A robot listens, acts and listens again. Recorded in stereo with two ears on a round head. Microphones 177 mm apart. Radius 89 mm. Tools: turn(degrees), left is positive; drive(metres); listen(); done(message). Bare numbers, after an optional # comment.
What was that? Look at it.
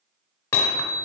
turn(30)
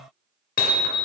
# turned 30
# So it is at 130° left.
turn(130)
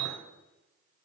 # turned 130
listen()
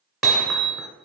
done("Found it: hammering, straight ahead.")